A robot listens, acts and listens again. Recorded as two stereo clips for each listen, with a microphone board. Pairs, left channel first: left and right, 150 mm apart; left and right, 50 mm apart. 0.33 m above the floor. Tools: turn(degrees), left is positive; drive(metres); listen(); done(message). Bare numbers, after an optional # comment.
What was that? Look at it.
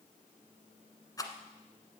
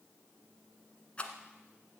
# The rattle: about 25° left or 155° left.
turn(25)
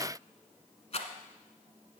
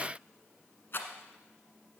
# So it is at 130° left.
turn(130)
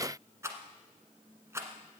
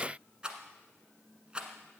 # The rattle is now 20° right.
turn(-20)
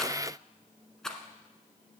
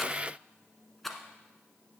done("Facing the rattle, 1 to 2 m away.")